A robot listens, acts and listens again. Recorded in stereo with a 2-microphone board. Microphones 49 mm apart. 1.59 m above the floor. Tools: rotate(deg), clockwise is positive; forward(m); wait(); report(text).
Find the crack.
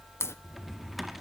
rotate(-65)
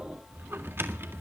wait()
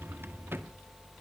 report("I heard a crack, but can't make it out now. It was about straight ahead or 50° left.")